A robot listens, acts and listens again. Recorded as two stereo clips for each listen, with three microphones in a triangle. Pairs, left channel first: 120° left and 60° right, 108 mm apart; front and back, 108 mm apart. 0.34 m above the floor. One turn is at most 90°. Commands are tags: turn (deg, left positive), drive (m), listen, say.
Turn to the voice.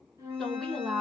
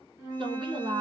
<turn deg="-90"/>
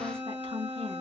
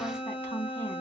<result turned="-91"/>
<turn deg="-65"/>
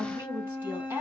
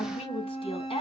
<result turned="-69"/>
<say>Found it: a woman speaking, straight ahead, 2 to 4 m away.</say>